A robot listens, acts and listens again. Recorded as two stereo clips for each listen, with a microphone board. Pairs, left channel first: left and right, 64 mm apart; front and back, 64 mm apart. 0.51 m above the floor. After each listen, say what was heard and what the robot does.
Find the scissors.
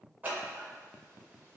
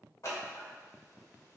The scissors: 25° right. Turn 25° right.
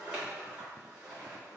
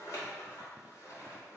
The scissors is now 15° right. Turn 15° right.
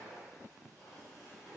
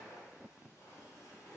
Facing the scissors.